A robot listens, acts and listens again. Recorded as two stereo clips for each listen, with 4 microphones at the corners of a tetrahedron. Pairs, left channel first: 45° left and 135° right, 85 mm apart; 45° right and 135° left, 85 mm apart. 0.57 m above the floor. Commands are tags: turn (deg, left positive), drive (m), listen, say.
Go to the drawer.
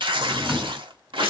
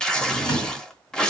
<turn deg="-50"/>
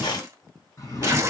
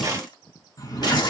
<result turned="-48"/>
<drive m="1.0"/>
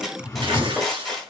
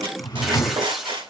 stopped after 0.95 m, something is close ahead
<turn deg="-10"/>
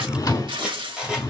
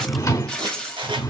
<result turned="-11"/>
<say>Arrived at the drawer, straight ahead.</say>